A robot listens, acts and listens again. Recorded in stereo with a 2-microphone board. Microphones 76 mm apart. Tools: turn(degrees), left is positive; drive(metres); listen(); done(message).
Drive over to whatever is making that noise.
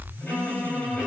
turn(degrees=25)
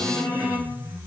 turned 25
turn(degrees=130)
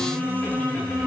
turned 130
turn(degrees=10)
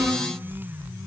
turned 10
drive(metres=1.0)
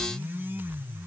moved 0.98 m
listen()
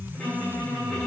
drive(metres=1.0)
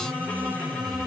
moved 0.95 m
turn(degrees=10)
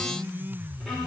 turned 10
drive(metres=1.0)
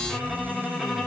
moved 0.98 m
drive(metres=1.0)
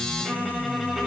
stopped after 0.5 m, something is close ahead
done("Arrived at the violin, straight ahead.")